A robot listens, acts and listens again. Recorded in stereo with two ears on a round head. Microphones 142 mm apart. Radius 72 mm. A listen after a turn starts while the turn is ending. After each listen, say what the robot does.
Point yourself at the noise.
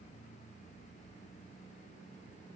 Keep listening.
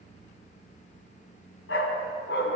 Turn 90° left.
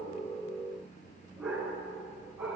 Facing the dog barking, over 4 m away.